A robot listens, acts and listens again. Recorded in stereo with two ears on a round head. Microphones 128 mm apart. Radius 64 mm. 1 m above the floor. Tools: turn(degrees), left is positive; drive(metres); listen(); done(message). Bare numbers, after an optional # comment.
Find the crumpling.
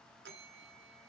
listen()
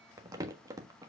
# The crumpling: about 20° right or 160° right.
turn(-20)
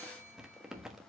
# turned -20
done("Found it: crumpling, straight ahead, 1 to 2 m away.")